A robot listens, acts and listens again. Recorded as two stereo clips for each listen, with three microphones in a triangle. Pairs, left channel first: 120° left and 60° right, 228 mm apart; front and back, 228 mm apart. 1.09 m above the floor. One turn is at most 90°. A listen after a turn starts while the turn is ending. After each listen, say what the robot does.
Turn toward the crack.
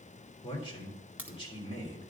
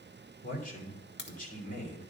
Turn 20° left.
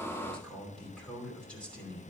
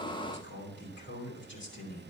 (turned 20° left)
I heard a crack from this way, but can't make it out now.